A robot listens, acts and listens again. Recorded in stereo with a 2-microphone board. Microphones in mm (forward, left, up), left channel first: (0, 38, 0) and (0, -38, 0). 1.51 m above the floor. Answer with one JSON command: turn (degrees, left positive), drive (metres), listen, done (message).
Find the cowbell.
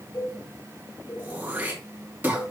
{"turn": 55}
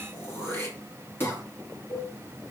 {"turn": 65}
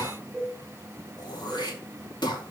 {"done": "Found it: a cowbell, straight ahead."}